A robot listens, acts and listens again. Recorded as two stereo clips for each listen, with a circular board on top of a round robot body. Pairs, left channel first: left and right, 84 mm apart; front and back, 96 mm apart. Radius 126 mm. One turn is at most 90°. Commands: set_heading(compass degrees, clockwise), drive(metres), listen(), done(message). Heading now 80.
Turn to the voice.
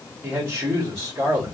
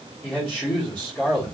set_heading(155)
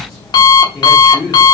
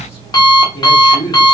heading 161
set_heading(151)
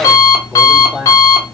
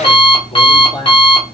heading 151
done("Found it: a man speaking, straight ahead.")